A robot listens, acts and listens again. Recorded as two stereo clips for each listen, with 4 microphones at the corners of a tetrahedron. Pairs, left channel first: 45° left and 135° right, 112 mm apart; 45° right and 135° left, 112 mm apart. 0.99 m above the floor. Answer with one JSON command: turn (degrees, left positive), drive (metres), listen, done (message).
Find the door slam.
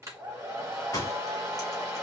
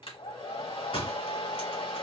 {"turn": -15}
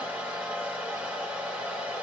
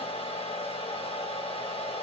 {"done": "I heard a door slam from this way, but can't make it out now."}